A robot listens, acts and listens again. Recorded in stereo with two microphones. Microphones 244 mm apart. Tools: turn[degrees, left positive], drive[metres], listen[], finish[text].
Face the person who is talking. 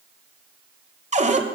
Action: listen[]
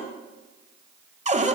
Action: listen[]
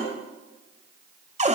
Action: finish[I can't make out anyone speaking, only a cupboard door.]